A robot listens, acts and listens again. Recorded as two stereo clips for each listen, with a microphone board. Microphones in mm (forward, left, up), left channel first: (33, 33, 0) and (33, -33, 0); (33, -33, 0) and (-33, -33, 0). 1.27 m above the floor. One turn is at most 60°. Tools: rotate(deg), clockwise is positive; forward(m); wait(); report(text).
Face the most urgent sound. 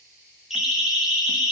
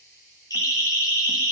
rotate(10)
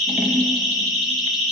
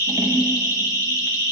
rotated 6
report("Found it: a siren, straight ahead.")